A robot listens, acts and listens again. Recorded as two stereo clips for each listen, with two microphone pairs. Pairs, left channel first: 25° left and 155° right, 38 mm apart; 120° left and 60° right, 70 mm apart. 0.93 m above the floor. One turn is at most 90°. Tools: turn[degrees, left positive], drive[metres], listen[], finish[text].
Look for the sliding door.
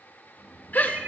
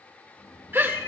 Thought: The sliding door: 120° left.
Action: turn[90]
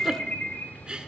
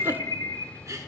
Thought: The sliding door is now 35° left.
Action: turn[35]
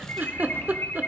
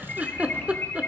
Action: listen[]
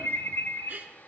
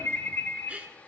Action: listen[]
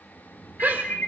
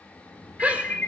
Action: finish[Facing the sliding door.]